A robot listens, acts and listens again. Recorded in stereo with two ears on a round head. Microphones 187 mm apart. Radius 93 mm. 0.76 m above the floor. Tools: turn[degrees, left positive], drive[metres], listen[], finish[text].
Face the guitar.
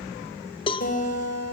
Thought: The guitar: about 45° left or 135° left.
Action: turn[45]
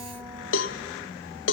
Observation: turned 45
Action: listen[]
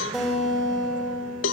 Action: finish[Facing the guitar, 2 to 4 m away.]